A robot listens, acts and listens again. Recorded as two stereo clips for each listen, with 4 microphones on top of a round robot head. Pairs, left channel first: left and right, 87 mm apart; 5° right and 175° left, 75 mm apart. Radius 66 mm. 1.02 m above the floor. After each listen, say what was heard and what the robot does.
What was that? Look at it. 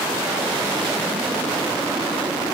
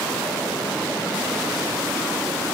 Keep listening.
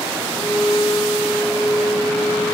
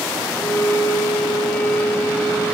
The violin: 35° left. Turn 35° left.
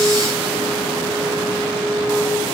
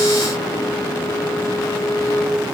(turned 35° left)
Facing the violin.